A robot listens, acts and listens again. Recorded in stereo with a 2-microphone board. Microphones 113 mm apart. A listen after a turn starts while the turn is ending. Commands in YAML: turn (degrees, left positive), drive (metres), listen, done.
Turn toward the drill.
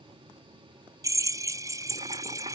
turn: -30
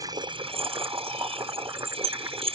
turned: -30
turn: -120
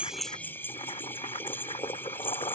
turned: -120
turn: 20
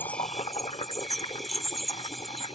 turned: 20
done: "Found it: a drill, straight ahead."